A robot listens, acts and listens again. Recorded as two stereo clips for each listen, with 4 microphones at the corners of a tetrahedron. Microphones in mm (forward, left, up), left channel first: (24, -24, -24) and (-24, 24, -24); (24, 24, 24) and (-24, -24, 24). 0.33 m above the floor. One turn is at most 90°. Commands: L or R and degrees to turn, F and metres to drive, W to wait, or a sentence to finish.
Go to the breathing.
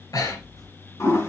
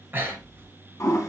R75
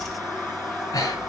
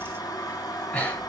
R25
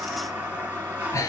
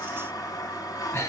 R10
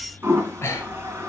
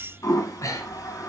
F1.0
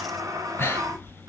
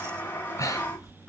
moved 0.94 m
F1.0
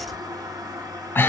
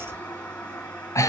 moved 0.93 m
L10
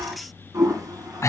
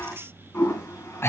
F1.0
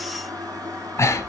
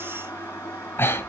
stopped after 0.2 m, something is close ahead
R10
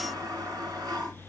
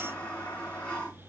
W
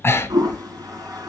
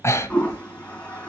Arrived at the breathing, straight ahead.